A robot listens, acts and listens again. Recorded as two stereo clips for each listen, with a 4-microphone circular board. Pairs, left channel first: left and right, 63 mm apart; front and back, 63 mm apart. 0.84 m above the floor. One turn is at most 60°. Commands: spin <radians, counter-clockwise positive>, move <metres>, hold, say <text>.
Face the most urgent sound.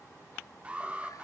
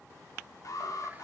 spin -0.35
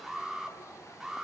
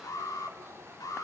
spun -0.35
say Facing the alarm.